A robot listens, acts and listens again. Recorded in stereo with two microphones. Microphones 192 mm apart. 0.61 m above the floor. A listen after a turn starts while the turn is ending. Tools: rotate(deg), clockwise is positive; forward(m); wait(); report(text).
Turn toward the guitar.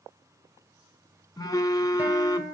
rotate(30)
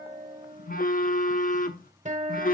rotate(140)
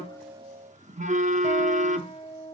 rotate(-30)
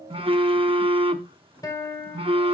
rotate(-20)
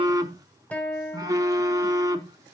rotate(-10)
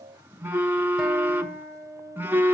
report("Found it: a guitar, straight ahead, 1 to 2 m away.")